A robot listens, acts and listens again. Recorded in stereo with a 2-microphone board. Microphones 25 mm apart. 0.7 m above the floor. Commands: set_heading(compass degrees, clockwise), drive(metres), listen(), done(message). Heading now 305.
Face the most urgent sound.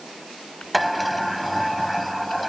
listen()
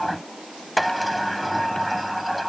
listen()
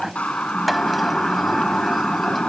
set_heading(240)
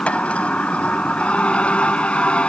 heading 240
set_heading(190)
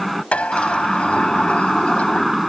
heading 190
done("Found it: a siren, straight ahead.")